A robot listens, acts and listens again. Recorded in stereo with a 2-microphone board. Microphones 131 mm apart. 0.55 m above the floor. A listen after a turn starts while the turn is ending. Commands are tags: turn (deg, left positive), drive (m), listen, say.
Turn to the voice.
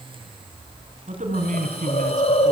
<turn deg="-65"/>
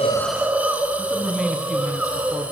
<say>Found it: a man speaking, straight ahead.</say>